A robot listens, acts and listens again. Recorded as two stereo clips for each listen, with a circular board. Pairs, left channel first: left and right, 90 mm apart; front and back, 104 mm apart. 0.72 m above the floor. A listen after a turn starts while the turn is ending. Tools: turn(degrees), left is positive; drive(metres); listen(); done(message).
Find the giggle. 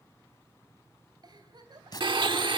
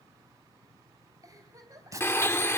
turn(degrees=-125)
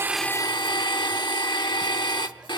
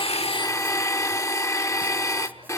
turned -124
listen()
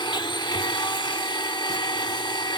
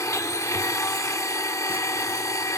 listen()
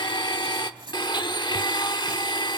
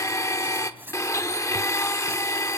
done("Facing where the giggle came from. I can't hear it now.")